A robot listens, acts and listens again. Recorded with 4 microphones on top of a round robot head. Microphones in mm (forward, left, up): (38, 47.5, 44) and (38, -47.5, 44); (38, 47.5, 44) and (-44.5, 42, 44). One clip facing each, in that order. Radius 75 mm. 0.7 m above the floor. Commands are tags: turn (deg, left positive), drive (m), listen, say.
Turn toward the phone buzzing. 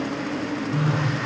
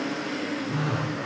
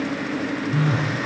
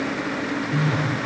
<turn deg="-100"/>
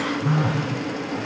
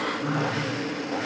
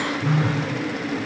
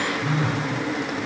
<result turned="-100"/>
<say>Facing the phone buzzing.</say>